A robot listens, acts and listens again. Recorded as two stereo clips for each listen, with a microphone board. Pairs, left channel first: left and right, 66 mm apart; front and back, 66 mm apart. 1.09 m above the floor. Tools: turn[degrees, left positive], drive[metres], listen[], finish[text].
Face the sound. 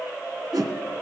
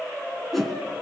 Thought: The whoosh: 90° right.
Action: turn[-90]
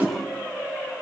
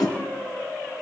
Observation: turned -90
Thought: The whoosh is now 25° right.
Action: turn[-25]
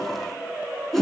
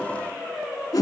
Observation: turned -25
Action: finish[Found it: a whoosh, straight ahead, 2 to 4 m away.]